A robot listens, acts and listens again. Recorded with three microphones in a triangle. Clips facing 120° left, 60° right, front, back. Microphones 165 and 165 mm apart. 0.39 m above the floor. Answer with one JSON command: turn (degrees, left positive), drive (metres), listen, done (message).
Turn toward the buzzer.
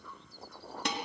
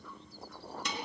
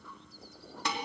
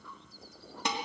{"listen": true}
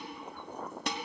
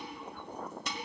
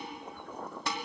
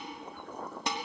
{"listen": true}
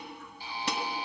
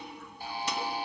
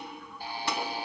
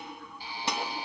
{"turn": -30}
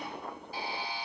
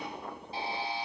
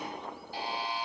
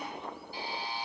{"done": "Facing the buzzer, 1 to 2 m away."}